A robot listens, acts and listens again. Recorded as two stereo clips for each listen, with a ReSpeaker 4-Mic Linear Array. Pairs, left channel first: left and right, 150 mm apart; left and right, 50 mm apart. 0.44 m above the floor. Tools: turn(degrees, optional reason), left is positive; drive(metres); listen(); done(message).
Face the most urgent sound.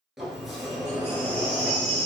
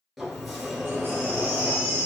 turn(degrees=-45, reason="The baby crying: about 45° right or 135° right.")
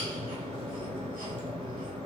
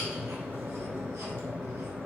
listen()
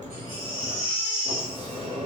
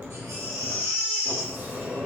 turn(degrees=-95, reason="So it is at 95° right.")
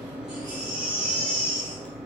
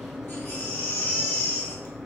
turn(degrees=35, reason="The baby crying is now 35° left.")
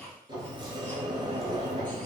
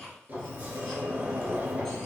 listen()
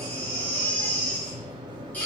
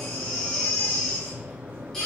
turn(degrees=10, reason="The baby crying is now 10° left.")
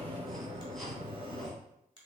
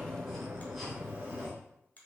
listen()
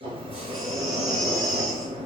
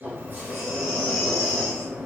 listen()
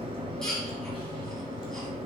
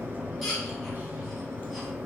done("I heard a baby crying from this way, but can't make it out now.")